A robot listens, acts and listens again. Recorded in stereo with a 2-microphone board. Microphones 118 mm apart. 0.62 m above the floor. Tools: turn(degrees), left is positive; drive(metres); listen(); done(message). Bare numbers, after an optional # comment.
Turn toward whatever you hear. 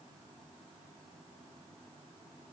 listen()
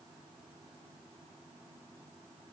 listen()
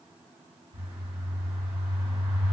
# The bird: about 50° right or 130° right.
turn(-50)
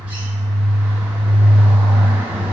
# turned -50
# So it is at 15° right.
turn(-15)
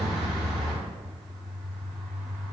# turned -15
done("Found it: a bird, straight ahead, under 1 m away.")